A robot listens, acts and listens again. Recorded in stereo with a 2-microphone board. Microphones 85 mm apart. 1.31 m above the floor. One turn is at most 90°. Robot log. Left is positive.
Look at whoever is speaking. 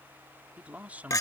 note: The man speaking: about 20° right or 160° right.
cmd yaw -20
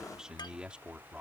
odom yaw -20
cmd yaw -30
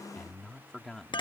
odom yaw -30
end: Facing the man speaking.